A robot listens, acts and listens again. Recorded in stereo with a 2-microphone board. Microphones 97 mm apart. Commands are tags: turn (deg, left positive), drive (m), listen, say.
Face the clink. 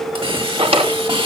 <listen/>
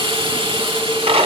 <listen/>
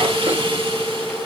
<say>I can't make out a clink, only a hiss and a drawer.</say>